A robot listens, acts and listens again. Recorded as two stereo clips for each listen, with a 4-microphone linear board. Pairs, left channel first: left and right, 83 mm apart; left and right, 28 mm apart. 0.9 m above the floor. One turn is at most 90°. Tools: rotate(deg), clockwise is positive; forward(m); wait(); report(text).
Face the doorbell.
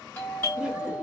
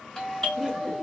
rotate(-20)
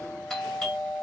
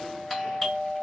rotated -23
report("Facing the doorbell.")